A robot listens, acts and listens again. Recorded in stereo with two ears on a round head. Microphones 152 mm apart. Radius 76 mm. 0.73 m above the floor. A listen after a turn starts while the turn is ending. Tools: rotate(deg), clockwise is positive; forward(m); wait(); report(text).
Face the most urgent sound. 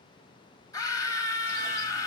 rotate(-20)
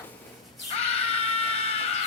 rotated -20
rotate(-135)
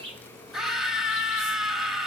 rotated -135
report("Facing the scream.")